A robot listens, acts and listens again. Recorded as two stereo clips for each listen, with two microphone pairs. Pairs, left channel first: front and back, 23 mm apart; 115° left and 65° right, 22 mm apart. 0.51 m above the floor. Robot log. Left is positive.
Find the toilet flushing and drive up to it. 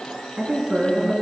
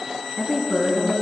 cmd idle
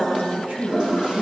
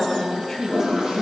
note: The toilet flushing: 125° right.
cmd yaw -125
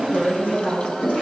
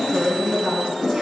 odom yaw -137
note: The toilet flushing is now 10° left.
cmd yaw +10
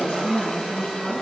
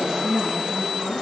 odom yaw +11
cmd idle
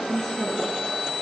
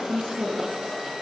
cmd idle
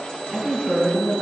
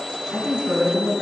end: Facing where the toilet flushing came from. I can't hear it now. I did not reach it.